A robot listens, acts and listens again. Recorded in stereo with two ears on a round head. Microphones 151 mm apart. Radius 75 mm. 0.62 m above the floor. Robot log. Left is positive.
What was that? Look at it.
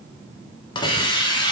note: The hiss: about 25° left or 155° left.
cmd yaw +25
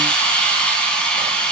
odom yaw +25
end: Found it: a hiss, straight ahead.